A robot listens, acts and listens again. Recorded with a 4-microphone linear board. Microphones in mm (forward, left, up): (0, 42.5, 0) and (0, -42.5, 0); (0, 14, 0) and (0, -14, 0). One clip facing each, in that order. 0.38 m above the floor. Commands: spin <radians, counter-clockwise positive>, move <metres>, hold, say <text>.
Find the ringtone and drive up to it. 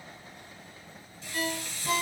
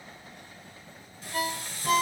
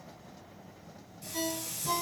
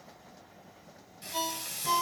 spin -0.96
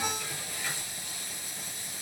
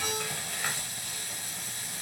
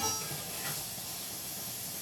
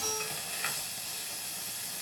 hold
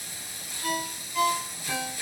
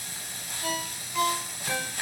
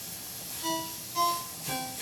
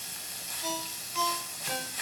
move 1.0
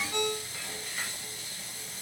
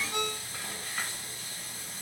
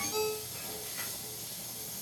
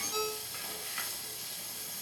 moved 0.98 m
move 1.0
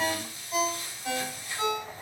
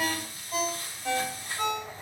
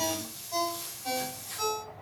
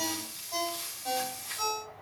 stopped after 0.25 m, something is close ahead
say Arrived at the ringtone, straight ahead.